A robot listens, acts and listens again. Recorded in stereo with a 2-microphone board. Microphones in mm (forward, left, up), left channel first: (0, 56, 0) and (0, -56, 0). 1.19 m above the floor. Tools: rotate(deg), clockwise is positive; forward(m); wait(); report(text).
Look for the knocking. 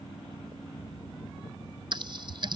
wait()
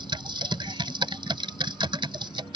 wait()
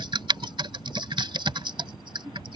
report("I can't make out knocking to turn to.")